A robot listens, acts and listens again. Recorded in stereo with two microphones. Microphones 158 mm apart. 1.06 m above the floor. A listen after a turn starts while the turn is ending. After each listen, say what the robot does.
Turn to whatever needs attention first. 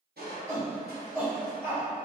Turn 15° right.
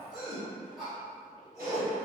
Found it: a shout, straight ahead.